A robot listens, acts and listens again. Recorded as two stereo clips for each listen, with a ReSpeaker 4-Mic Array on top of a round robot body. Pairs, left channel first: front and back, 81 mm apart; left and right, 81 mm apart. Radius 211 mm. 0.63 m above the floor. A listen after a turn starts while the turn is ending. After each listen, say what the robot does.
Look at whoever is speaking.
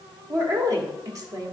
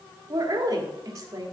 Turn 140° right.
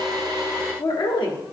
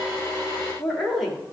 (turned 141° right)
Found it: a woman speaking, straight ahead.